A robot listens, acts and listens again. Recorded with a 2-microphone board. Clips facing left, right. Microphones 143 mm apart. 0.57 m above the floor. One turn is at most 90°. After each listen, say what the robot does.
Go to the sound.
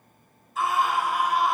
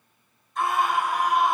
Turn 30° left.
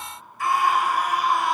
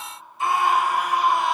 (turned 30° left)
Turn 25° right.
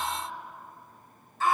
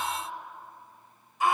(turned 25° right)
Turn 15° right.
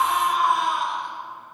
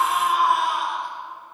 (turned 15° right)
Drive 1.0 m forward.
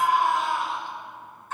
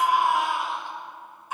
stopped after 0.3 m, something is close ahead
Turn 15° right.
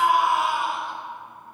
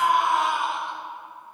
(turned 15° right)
Blocked. The scream is further on, straight ahead.